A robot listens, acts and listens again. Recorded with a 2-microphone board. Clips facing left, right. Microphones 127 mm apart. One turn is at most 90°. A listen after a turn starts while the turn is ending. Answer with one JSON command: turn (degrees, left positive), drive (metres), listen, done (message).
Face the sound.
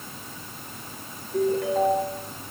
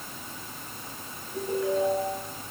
{"turn": 90}
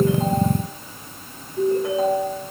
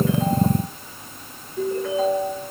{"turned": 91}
{"turn": 10}
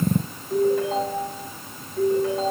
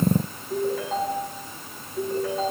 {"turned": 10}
{"done": "Found it: a ringtone, straight ahead."}